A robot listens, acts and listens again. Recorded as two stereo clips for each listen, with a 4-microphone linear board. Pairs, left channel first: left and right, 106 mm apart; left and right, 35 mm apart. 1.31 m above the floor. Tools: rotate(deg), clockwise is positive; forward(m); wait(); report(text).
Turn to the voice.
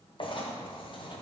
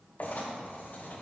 wait()
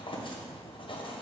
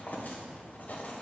wait()
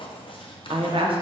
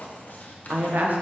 rotate(55)
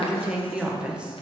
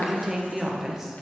rotate(10)
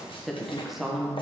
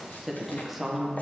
report("Facing the woman speaking.")